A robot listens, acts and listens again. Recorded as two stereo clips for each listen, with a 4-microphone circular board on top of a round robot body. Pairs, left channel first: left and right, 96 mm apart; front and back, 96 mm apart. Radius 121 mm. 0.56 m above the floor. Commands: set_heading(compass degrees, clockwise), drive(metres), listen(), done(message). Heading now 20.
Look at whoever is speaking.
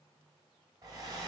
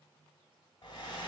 listen()
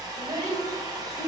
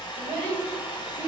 set_heading(165)
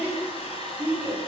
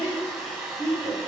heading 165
set_heading(185)
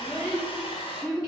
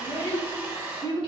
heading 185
done("Facing the child speaking.")